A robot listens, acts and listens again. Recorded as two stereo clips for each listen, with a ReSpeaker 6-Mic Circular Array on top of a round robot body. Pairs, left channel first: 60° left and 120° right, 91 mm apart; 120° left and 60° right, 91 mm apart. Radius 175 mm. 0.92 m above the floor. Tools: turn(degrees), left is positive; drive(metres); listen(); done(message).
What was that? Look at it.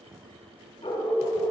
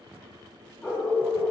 turn(degrees=65)
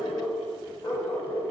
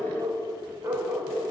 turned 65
turn(degrees=25)
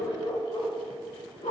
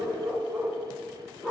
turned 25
turn(degrees=40)
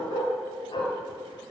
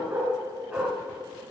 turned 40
turn(degrees=20)
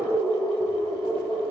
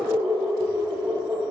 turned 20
turn(degrees=15)
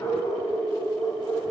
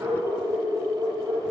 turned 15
done("Facing the dog barking, 2 to 4 m away.")